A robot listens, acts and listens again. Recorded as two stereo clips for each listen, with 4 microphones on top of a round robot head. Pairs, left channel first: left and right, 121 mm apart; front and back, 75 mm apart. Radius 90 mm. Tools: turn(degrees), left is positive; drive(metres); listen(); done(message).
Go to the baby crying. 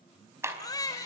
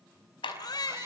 turn(degrees=30)
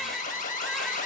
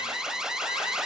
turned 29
listen()
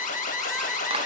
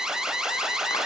listen()
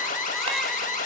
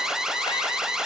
done("Facing where the baby crying came from. I can't hear it now. I did not reach it.")